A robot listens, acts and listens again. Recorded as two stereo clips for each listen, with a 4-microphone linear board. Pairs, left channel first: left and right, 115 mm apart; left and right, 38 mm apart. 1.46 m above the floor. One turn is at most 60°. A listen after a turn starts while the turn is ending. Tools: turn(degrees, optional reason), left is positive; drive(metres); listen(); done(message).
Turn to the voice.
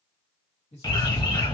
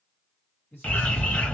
turn(degrees=60)
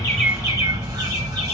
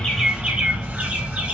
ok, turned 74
turn(degrees=15, reason="Nothing new. It was at 15° left.")
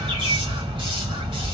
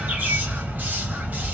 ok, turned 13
listen()
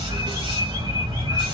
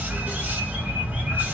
done("I heard a man speaking from this way, but can't make it out now.")